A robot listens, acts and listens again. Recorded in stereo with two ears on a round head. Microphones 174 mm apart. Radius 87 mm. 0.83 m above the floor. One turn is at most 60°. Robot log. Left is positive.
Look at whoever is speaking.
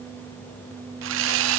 cmd idle
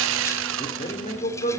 note: The man speaking: about 35° left or 145° left.
cmd yaw +35
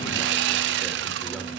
cmd idle
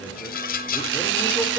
cmd idle
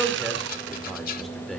end: Found it: a man speaking, straight ahead, 2 to 4 m away.